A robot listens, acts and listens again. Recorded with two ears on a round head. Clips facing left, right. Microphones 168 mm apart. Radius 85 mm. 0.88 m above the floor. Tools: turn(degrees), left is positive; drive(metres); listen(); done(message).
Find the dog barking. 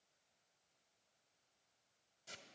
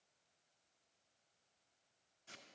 listen()
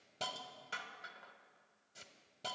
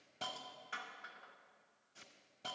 listen()
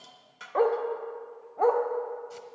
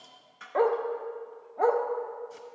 turn(degrees=-30)
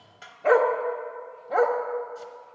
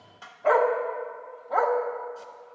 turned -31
turn(degrees=25)
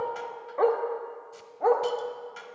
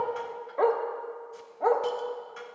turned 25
done("Found it: a dog barking, straight ahead.")